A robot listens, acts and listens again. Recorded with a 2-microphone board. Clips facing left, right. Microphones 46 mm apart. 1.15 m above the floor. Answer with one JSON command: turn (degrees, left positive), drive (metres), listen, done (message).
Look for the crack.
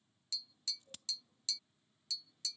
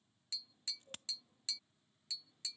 {"turn": -40}
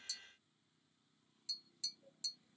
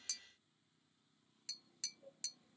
{"listen": true}
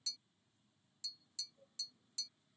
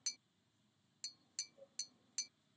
{"done": "I heard a crack, but can't make it out now. It was about straight ahead or 100° right."}